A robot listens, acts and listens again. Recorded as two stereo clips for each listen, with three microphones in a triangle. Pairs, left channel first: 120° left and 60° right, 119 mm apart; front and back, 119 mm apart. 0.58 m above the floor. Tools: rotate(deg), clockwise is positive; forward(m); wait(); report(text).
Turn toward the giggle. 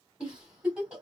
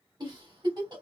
rotate(140)
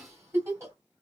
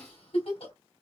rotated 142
report("Found it: a giggle, straight ahead, 1 to 2 m away.")